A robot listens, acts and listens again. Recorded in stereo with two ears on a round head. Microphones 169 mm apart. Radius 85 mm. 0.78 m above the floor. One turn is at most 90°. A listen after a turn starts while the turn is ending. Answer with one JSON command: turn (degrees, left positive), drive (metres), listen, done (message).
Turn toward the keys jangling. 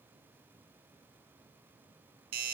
{"listen": true}
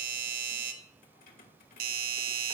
{"turn": 50}
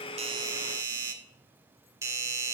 {"listen": true}
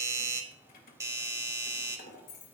{"turn": 50}
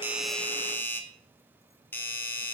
{"listen": true}
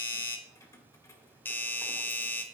{"turn": 15}
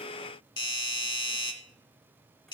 {"listen": true}
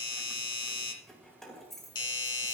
{"done": "Facing the keys jangling."}